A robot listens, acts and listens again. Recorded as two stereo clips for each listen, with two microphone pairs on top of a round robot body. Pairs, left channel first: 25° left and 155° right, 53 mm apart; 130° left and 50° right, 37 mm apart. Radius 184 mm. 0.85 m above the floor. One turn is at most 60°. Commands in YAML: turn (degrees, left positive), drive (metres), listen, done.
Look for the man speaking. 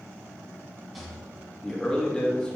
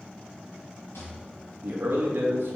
turn: -55
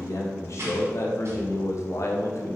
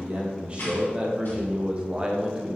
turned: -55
turn: 15
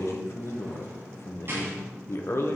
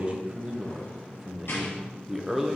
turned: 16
turn: 25
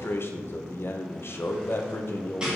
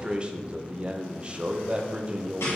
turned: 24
done: "Found it: a man speaking, straight ahead."